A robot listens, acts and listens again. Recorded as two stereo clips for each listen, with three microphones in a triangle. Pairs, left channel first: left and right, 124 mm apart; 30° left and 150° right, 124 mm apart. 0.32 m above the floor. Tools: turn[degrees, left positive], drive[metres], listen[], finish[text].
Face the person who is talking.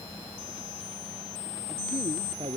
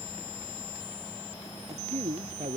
Thought: The man speaking: 125° right.
Action: turn[-125]
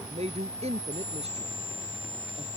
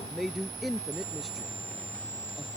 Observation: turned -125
Thought: The man speaking is now 60° right.
Action: turn[-60]
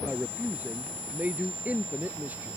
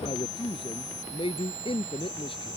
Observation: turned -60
Thought: The man speaking is now 15° right.
Action: turn[-15]
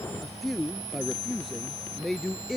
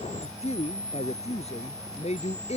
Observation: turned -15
Action: finish[Facing the man speaking.]